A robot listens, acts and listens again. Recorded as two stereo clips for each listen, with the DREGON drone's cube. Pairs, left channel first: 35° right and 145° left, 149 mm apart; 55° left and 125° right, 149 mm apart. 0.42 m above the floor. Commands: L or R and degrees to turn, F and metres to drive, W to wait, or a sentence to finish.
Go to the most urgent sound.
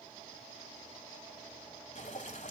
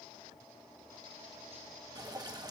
W
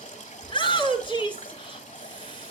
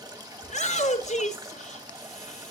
L20
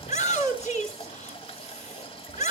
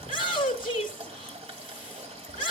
F1.0
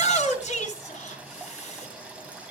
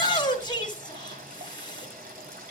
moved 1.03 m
F1.0
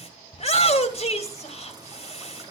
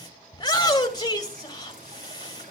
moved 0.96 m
F1.0
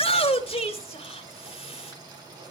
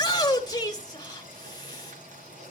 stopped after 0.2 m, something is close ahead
Arrived at the shout, straight ahead.